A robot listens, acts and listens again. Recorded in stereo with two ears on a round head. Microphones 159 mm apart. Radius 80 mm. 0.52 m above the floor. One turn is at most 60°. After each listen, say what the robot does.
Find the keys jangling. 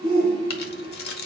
Turn 55° left.
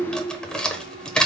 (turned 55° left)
Facing the keys jangling.